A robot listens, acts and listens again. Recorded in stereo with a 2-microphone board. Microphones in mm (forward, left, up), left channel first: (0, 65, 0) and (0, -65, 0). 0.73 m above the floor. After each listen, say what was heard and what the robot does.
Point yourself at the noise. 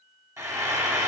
The frying: about 25° right or 155° right. Turn 25° right.
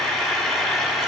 Facing the frying, under 1 m away.